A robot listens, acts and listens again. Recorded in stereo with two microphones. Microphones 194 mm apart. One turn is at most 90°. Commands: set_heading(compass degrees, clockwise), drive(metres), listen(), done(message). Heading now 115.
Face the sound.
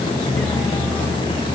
listen()
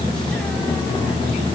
listen()
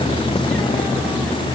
done("I can't make out anything to turn to.")